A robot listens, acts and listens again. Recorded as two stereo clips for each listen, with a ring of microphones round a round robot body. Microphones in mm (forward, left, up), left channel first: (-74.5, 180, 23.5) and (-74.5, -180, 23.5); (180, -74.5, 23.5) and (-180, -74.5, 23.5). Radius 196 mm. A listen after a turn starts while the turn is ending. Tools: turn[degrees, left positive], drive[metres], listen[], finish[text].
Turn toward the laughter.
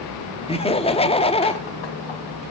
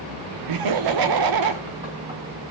Thought: The laughter: 165° left.
Action: turn[165]
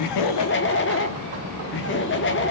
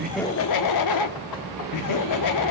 Thought: The laughter is now 30° left.
Action: turn[30]
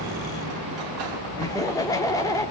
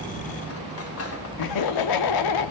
Thought: The laughter is now 10° left.
Action: turn[10]
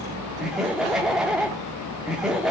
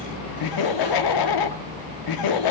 Action: finish[Facing the laughter, 1 to 2 m away.]